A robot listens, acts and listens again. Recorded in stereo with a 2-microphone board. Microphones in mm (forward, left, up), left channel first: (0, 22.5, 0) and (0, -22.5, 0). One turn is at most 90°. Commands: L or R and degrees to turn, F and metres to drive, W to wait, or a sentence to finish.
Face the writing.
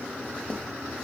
L30
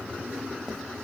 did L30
W
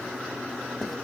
W
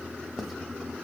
Facing the writing, 1 to 2 m away.